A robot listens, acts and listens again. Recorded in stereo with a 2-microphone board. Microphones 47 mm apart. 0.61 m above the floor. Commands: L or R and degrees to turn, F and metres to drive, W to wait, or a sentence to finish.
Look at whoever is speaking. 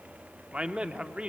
R30
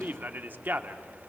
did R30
R120
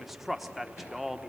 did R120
Found it: a man speaking, straight ahead, 1 to 2 m away.